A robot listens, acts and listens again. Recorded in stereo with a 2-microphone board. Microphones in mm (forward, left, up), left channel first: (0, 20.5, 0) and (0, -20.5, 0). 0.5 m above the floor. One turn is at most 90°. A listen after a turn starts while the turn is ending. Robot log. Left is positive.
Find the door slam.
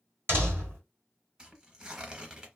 note: The door slam: about 70° right or 110° right.
cmd yaw -70
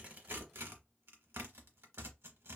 cmd idle
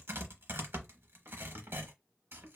end: I heard a door slam, but can't make it out now. It was about straight ahead or 40° right.